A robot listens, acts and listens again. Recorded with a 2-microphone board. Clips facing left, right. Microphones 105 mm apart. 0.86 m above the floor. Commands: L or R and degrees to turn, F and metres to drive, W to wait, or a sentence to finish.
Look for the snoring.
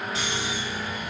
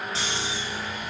R30
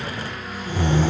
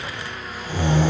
R120
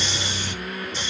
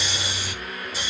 Facing the snoring.